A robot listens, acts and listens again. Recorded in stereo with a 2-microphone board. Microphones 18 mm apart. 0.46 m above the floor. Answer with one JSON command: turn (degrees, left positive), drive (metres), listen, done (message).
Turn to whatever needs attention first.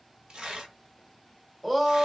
{"turn": -15}
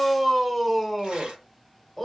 {"done": "Found it: a shout, straight ahead."}